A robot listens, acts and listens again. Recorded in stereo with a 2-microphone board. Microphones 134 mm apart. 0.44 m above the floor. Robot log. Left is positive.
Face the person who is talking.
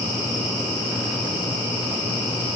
cmd idle
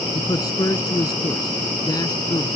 note: The man speaking: about 30° left or 150° left.
cmd yaw +30
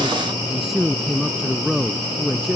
end: Found it: a man speaking, straight ahead.